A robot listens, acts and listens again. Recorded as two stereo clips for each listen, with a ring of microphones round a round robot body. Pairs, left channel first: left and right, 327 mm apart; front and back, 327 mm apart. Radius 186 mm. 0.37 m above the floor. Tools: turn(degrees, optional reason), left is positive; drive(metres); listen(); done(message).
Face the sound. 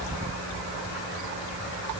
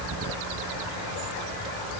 listen()
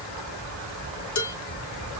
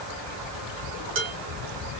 turn(degrees=125, reason="The dishes clattering: 125° left.")
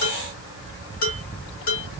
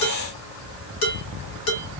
turn(degrees=25, reason="The dishes clattering is now 25° left.")
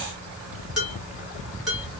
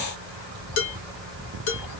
done("Found it: dishes clattering, straight ahead, 2 to 4 m away.")